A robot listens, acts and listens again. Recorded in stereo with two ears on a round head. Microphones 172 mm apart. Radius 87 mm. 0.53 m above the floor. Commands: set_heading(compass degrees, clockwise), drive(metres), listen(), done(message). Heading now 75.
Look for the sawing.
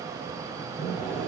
set_heading(45)
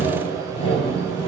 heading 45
set_heading(260)
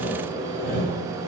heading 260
set_heading(215)
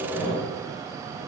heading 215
done("Facing the sawing.")